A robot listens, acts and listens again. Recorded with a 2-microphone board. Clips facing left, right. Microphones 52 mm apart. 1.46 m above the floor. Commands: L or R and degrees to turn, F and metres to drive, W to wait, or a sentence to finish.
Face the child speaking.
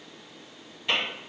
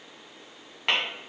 W
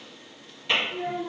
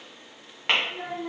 R70
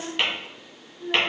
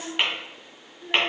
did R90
L15
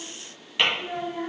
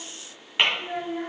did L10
Facing the child speaking, 2 to 4 m away.